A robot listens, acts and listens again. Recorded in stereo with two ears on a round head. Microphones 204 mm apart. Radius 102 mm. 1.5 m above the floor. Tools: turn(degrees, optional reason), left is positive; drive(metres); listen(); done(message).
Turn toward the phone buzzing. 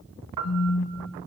turn(degrees=65, reason="The phone buzzing: about 65° left or 115° left.")
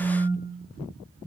done("Facing the phone buzzing, 2 to 4 m away.")